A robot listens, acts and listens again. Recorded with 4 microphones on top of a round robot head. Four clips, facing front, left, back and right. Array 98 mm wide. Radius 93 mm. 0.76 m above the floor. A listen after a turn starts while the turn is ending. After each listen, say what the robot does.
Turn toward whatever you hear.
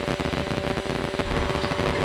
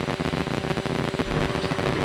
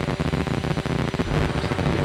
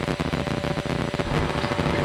Turn 75° right.
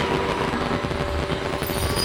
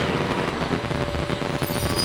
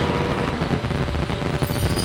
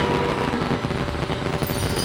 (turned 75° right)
Turn 25° right.
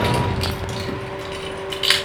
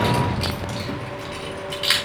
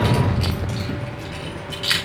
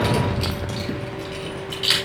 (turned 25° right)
Turn 10° left.
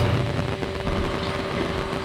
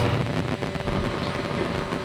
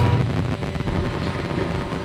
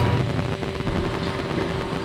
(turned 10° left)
Found it: keys jangling, straight ahead, over 4 m away.